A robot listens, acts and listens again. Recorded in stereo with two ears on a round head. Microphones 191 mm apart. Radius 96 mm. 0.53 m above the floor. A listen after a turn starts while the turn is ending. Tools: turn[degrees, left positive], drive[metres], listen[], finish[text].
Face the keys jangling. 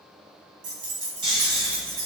Thought: The keys jangling: about 45° right or 135° right.
Action: turn[-45]
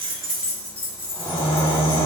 Thought: So it is at 10° left.
Action: turn[10]
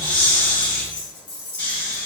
Thought: The keys jangling is now 25° left.
Action: turn[25]
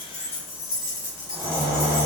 Thought: The keys jangling is now 15° left.
Action: turn[15]
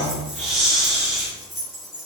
Action: finish[Found it: keys jangling, straight ahead, 2 to 4 m away.]